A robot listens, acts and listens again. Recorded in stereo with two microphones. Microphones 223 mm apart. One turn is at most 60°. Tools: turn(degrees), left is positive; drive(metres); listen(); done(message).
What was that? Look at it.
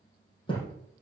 turn(degrees=20)
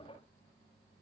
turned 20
listen()
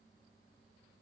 done("I heard a thud, but can't make it out now. It was about straight ahead or 140° left.")